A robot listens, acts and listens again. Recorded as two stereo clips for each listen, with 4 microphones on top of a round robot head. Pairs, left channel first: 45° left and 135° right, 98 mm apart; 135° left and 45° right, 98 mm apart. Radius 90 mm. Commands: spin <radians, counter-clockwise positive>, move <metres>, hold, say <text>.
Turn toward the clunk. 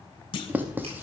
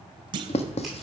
say Facing the clunk, under 1 m away.